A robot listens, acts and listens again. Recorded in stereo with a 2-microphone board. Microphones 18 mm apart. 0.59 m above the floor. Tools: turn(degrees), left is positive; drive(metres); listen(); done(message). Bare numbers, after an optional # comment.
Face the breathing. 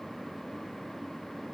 listen()
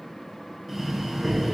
turn(30)
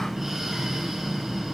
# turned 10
# So it is at 10° right.
turn(-10)
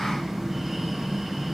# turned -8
done("Facing the breathing.")